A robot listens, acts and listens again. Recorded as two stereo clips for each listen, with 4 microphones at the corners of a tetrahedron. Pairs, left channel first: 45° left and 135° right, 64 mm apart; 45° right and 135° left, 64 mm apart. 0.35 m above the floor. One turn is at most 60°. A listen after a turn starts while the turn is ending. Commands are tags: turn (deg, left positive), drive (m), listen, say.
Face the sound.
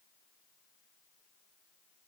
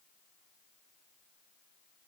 <listen/>
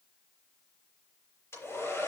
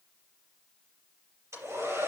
<turn deg="60"/>
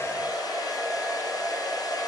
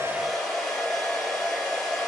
<turn deg="35"/>
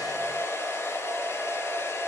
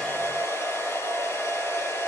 <say>Facing the hair dryer.</say>